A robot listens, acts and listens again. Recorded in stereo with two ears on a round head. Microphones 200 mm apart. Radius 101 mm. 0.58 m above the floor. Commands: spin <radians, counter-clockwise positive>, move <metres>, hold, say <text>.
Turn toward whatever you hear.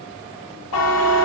spin 1.22
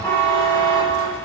spin 0.17
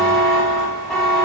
say Found it: a buzzer, straight ahead, under 1 m away.